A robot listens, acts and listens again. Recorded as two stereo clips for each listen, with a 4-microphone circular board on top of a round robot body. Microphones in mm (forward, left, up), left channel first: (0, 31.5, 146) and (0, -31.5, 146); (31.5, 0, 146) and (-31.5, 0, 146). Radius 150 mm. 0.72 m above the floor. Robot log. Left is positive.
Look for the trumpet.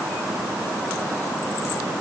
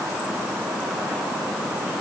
cmd idle
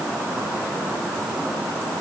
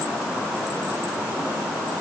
cmd idle
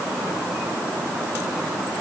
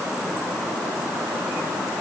end: I can't make out a trumpet.